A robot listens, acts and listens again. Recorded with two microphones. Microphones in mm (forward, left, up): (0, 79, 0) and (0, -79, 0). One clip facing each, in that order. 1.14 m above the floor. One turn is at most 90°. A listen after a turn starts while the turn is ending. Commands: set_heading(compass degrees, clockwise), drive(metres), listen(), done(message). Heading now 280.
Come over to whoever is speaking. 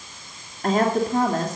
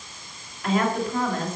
set_heading(240)
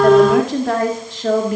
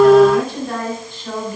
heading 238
set_heading(148)
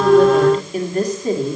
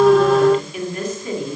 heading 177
set_heading(142)
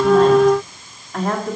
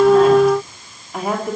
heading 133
set_heading(143)
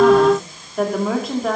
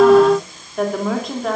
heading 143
drive(1.0)
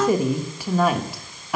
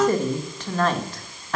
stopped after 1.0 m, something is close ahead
set_heading(133)
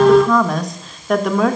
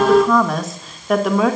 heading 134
done("I am next to the woman speaking.")